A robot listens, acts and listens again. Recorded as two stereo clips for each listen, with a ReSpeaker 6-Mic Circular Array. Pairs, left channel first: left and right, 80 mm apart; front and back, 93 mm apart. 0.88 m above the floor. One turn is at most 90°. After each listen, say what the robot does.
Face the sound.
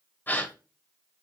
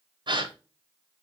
Turn 90° left.
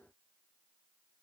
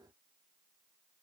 Turn 65° left.
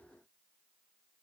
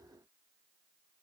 Facing where the gasp came from. I can't hear it now.